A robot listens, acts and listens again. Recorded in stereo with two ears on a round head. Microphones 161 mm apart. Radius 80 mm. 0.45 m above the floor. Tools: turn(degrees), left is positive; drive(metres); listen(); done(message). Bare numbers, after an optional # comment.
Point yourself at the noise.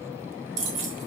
# The keys jangling: about 75° right or 105° right.
turn(-75)
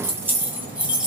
done("Facing the keys jangling.")